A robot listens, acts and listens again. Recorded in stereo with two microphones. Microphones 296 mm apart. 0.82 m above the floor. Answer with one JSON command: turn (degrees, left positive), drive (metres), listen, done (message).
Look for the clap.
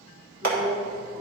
{"turn": -65}
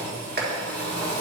{"turn": -35}
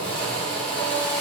{"listen": true}
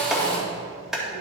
{"done": "Facing the clap."}